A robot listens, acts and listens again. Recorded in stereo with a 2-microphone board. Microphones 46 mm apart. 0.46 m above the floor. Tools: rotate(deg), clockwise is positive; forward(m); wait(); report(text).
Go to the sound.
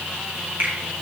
rotate(50)
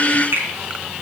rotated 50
rotate(80)
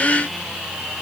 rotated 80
wait()
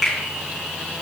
forward(1.0)
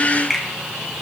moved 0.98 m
forward(1.0)
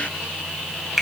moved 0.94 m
forward(1.0)
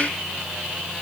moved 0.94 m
wait()
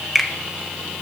forward(1.0)
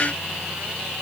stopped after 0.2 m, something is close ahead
wait()
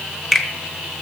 report("Arrived at the finger snap, straight ahead.")